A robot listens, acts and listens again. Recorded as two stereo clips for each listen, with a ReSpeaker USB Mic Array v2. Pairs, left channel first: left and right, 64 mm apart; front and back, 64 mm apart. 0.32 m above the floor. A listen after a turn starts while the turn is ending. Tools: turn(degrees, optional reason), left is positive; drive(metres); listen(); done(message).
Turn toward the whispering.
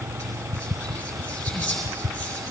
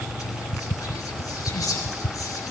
turn(degrees=10, reason="The whispering: 10° left.")
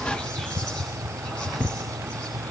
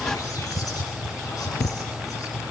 listen()
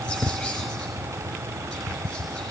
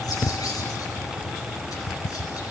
listen()
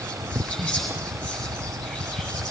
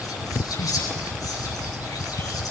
done("Facing the whispering, over 4 m away.")